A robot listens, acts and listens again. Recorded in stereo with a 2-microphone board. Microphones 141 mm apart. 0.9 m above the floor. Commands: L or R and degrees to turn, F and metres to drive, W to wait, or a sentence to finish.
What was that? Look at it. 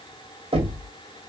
R45
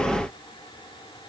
W
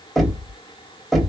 Found it: knocking, straight ahead.